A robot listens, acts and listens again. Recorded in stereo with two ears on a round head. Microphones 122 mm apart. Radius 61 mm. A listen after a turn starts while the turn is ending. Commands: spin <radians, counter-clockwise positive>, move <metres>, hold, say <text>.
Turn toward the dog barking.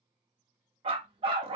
spin -0.70
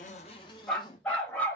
spin 0.26
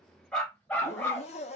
spin 0.26
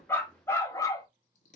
spin 0.44
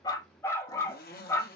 spin 0.35
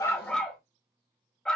say Found it: a dog barking, straight ahead.